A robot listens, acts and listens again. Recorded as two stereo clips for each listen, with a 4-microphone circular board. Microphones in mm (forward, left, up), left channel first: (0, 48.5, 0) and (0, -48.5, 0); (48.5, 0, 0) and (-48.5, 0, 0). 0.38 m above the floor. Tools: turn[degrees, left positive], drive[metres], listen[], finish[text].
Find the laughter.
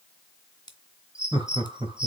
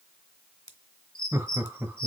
Thought: The laughter: 110° right.
Action: turn[-110]
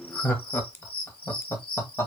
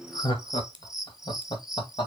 Thought: The laughter is now 30° left.
Action: turn[30]
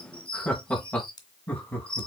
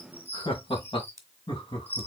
Thought: The laughter is now 20° left.
Action: turn[20]
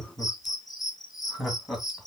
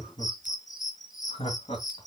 Action: finish[Facing the laughter, 2 to 4 m away.]